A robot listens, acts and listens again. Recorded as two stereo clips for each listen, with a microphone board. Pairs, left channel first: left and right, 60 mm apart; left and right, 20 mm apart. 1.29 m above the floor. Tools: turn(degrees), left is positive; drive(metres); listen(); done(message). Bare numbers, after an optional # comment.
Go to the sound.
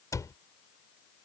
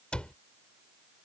# The cupboard door: about 65° left or 115° left.
turn(65)
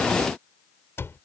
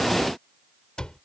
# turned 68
# So it is at 45° left.
turn(45)
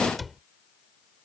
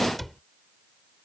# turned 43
drive(1.0)
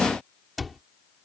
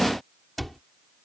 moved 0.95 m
drive(1.0)
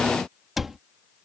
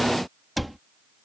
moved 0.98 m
drive(1.0)
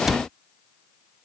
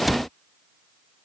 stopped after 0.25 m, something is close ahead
done("Arrived at the cupboard door, straight ahead.")